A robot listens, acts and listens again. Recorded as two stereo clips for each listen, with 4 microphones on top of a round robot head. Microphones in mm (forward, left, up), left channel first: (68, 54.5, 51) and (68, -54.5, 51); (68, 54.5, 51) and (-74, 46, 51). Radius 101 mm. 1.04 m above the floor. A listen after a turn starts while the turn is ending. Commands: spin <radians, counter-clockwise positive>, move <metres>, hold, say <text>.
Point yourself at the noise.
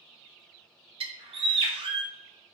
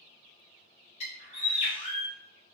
spin -0.87
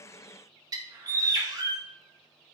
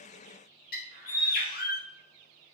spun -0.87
spin -0.52
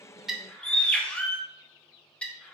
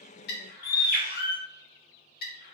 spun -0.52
spin 0.17
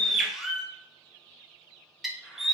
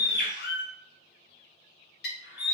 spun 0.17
say Facing the bird.